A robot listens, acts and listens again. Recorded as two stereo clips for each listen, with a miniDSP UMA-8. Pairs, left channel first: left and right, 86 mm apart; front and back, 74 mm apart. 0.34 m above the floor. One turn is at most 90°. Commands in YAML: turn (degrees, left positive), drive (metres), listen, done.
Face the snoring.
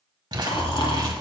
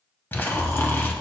turn: 60
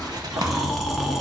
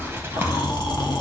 done: "Facing the snoring."